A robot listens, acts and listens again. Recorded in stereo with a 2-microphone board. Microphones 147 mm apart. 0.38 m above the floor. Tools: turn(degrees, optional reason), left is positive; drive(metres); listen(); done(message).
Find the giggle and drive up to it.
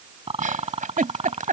turn(degrees=-65, reason="The giggle: about 65° right or 115° right.")
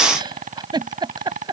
turn(degrees=-35, reason="So it is at 35° right.")
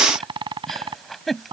drive(metres=1.0)
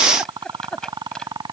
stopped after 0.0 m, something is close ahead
done("Something is in my way. I am facing the giggle but have not reached it.")